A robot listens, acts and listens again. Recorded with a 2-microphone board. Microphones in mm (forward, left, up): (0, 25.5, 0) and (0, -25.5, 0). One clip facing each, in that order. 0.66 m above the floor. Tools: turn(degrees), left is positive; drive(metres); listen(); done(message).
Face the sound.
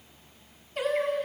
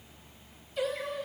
turn(degrees=65)
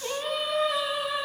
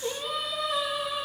turn(degrees=30)
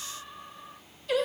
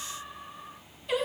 turn(degrees=-15)
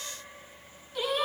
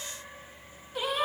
turn(degrees=-15)
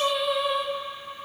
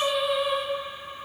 done("Found it: singing, straight ahead, 2 to 4 m away.")